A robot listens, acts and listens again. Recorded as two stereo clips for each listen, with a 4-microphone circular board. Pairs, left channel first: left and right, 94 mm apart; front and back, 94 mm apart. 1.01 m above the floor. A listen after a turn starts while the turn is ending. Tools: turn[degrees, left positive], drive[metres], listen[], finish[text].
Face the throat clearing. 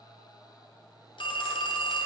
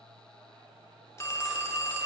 Action: listen[]
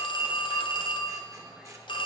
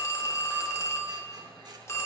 Action: listen[]
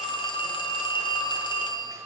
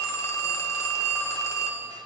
Action: finish[I can't make out throat clearing, only a phone ringing.]